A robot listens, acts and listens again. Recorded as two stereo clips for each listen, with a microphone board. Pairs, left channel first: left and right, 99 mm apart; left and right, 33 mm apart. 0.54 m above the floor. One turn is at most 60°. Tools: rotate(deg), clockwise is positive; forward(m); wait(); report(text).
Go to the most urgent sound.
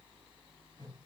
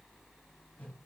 wait()
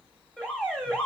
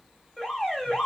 rotate(-30)
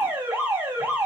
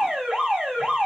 rotate(20)
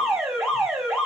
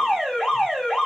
forward(1.0)
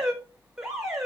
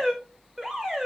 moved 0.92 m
forward(1.0)
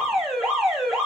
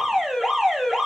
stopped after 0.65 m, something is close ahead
report("I am next to the alarm.")